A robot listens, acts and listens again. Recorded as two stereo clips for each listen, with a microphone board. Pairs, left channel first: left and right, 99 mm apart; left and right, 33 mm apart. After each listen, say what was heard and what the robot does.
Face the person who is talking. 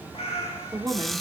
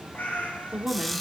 The woman speaking: about 45° right or 135° right. Turn 45° right.
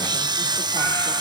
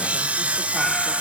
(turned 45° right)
Keep listening.
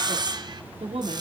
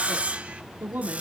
So it is at 90° right. Turn 90° right.
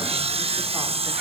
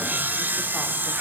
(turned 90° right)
Keep listening.
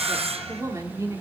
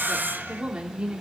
The woman speaking is now 35° right. Turn 35° right.
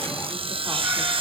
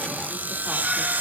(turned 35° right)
Keep listening.
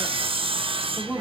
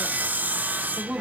The woman speaking is now 20° right. Turn 20° right.
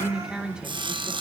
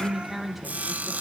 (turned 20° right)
The woman speaking is now 10° right. Turn 10° right.
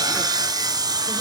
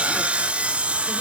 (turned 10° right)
Keep listening.
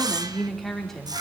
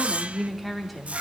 Facing the woman speaking.